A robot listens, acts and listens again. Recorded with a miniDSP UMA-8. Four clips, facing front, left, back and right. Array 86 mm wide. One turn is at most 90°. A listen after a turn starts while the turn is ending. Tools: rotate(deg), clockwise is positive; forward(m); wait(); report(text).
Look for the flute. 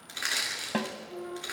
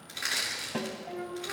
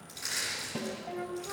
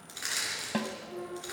rotate(-90)
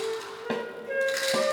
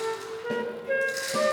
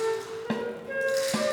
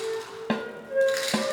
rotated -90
rotate(-85)
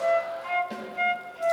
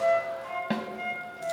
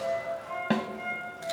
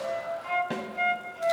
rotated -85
rotate(25)
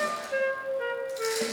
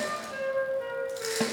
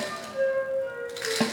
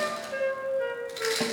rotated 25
rotate(10)
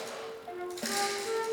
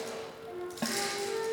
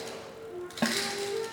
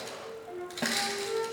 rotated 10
report("Facing the flute.")